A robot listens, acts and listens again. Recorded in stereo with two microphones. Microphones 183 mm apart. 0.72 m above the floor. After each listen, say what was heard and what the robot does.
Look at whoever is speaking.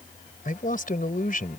The man speaking: about 50° left or 130° left. Turn 50° left.
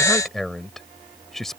Found it: a man speaking, straight ahead.